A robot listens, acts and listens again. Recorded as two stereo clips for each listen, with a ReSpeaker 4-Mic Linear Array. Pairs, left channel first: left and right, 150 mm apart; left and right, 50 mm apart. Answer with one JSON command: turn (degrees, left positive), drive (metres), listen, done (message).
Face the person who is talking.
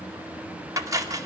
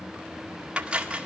{"listen": true}
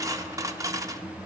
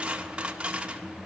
{"listen": true}
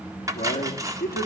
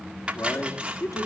{"turn": 90}
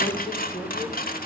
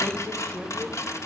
{"listen": true}
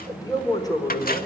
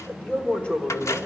{"turn": 25}
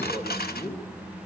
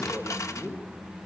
{"turn": 10}
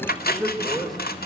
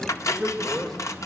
{"done": "Facing the man speaking."}